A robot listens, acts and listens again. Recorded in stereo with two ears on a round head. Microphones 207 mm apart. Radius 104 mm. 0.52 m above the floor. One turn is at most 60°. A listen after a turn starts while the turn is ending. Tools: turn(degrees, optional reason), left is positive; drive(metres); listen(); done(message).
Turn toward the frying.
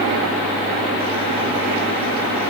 listen()
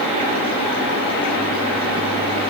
listen()
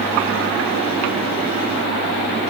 done("I can't make out frying.")